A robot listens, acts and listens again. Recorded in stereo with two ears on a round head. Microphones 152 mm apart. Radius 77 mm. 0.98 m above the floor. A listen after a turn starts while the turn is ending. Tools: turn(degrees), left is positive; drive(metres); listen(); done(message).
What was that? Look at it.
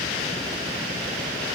listen()
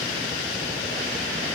listen()
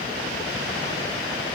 done("I can't make out anything.")